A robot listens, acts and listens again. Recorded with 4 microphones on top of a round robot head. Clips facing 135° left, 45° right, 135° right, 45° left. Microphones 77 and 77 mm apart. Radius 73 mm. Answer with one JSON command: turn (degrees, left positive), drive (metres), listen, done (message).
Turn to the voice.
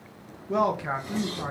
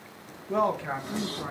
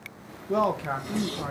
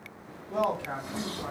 {"turn": -160}
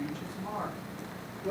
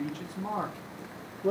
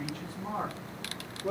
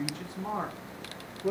{"turn": -40}
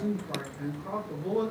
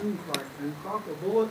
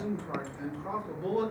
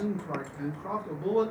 {"turn": -15}
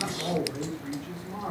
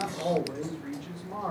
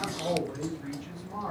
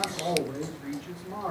{"done": "Found it: a man speaking, straight ahead."}